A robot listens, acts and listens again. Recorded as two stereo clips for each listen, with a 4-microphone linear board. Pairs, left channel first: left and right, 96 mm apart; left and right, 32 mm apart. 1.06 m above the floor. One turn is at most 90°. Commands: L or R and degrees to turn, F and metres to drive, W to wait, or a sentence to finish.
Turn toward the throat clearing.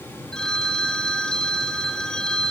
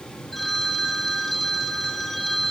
W
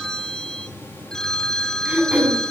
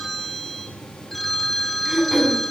R30
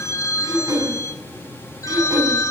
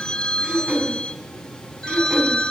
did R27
R90
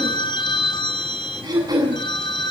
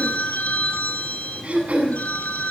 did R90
R50
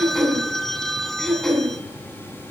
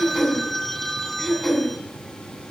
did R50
Facing the throat clearing.